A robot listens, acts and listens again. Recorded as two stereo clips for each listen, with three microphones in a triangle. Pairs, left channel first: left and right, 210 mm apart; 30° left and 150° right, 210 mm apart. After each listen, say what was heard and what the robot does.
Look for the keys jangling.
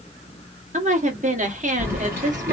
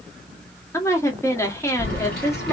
The keys jangling: 10° right. Turn 10° right.
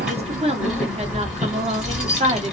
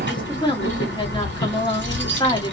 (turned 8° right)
Facing the keys jangling.